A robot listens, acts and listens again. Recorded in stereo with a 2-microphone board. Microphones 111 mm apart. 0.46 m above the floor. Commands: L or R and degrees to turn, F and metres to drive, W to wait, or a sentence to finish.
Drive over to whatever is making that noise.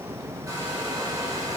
R35
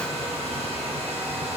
R110
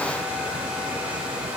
R10
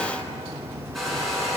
F1.0
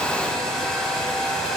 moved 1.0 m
F1.0
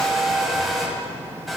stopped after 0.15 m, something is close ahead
Arrived at the hair dryer, straight ahead.